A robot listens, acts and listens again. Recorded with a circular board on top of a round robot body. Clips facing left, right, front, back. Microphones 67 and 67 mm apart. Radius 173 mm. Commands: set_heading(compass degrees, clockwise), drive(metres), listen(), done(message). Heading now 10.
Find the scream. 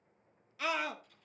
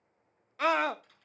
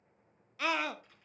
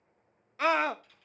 set_heading(140)
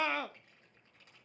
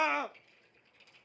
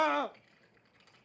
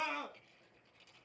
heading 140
set_heading(160)
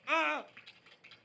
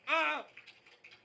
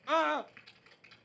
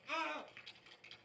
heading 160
done("Found it: a scream, straight ahead, under 1 m away.")